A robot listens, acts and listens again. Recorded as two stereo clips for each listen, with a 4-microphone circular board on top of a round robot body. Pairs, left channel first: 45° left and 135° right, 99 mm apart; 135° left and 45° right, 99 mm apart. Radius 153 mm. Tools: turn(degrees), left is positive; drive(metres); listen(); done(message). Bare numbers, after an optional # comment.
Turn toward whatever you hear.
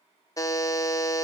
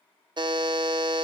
# The buzzer: 10° right.
turn(-10)
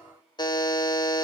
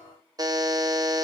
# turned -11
done("Found it: a buzzer, straight ahead, 1 to 2 m away.")